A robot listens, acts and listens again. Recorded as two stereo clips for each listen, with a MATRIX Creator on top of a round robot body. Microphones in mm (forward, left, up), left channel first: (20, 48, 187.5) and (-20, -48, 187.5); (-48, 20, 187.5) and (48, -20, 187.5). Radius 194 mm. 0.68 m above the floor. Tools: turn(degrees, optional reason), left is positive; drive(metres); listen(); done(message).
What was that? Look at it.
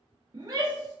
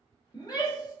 turn(degrees=-160, reason="The shout: 160° right.")
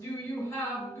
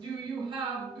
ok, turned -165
done("Found it: a shout, straight ahead, 1 to 2 m away.")